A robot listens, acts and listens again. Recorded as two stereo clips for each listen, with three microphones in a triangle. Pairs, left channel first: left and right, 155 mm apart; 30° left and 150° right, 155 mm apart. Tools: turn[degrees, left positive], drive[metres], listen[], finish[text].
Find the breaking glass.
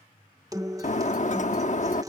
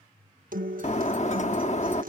Thought: The breaking glass: 60° left.
Action: turn[60]
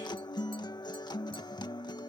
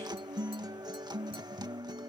Action: finish[Facing where the breaking glass came from. I can't hear it now.]